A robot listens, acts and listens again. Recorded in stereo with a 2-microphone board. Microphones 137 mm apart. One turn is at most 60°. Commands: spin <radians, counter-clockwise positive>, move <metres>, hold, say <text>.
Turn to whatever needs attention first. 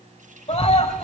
spin 0.87
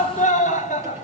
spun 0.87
spin 1.05
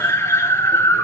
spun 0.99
spin 0.35
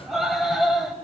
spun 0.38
say Found it: a scream, straight ahead.